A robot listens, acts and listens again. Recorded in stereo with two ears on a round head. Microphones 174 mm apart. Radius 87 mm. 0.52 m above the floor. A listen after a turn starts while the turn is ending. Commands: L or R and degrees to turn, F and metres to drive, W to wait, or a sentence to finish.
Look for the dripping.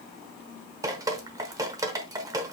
R20
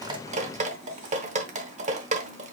R140
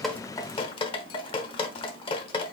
L30
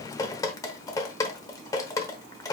L20
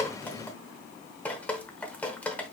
L10
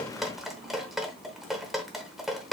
Facing the dripping.